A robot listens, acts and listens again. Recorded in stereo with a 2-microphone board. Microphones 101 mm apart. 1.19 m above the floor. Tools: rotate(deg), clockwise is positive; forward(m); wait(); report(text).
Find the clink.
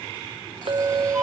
rotate(65)
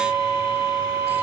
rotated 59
wait()
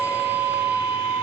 wait()
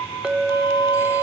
report("Facing the clink.")